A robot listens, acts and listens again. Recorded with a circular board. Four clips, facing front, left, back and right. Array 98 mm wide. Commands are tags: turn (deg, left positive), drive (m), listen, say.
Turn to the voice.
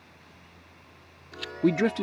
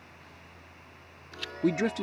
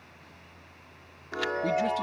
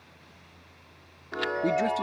<turn deg="15"/>
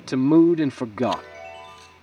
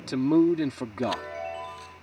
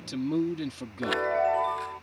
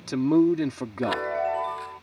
<say>Facing the man speaking.</say>